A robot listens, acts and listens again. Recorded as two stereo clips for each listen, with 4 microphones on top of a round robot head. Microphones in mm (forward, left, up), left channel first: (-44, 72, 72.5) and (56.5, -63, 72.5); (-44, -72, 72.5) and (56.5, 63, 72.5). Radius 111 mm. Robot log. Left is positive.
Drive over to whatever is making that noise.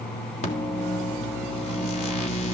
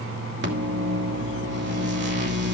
note: The microwave: 75° left.
cmd yaw +75
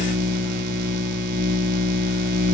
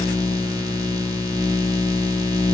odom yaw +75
note: The microwave is now 15° right.
cmd yaw -15
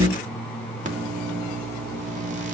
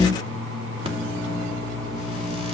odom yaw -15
cmd fwd 1.0
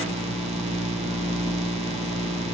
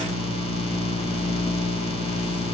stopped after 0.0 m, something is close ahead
end: Something is in my way. I am facing the microwave but have not reached it.